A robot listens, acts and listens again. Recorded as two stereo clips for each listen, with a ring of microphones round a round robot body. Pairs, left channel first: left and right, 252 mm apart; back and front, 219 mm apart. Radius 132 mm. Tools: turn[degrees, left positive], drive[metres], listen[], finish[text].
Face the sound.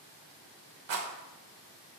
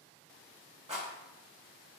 Thought: The rattle: 65° right.
Action: turn[-65]
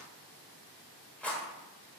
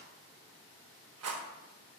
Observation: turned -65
Action: finish[Facing the rattle, under 1 m away.]